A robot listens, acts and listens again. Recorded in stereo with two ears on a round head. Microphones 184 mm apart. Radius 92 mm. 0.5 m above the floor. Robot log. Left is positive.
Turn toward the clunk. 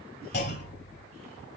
note: The clunk: about 55° left or 125° left.
cmd yaw +55
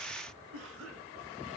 cmd idle
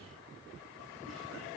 end: I heard a clunk, but can't make it out now. It was about straight ahead or 70° left.